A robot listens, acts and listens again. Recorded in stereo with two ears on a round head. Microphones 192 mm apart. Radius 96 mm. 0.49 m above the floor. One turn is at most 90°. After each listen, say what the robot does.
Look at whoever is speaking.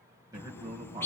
Turn 20° right.
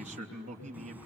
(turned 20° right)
Turn 90° right.
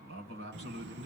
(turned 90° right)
Turn 90° right.
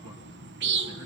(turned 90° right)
Keep listening.
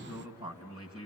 Turn 25° right.
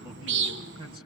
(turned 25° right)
Turn 25° right.
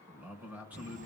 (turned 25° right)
Turn 10° right.
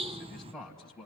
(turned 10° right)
Found it: a man speaking, straight ahead, 2 to 4 m away.